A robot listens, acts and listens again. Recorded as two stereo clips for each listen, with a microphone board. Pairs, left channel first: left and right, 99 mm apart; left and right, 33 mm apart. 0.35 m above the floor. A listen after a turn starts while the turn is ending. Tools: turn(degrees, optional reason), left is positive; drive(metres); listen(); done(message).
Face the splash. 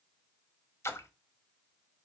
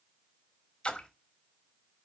turn(degrees=25, reason="The splash: about 25° left or 155° left.")
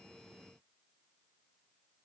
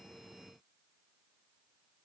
listen()
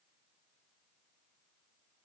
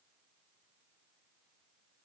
done("I heard a splash, but can't make it out now. It was about straight ahead or 130° left.")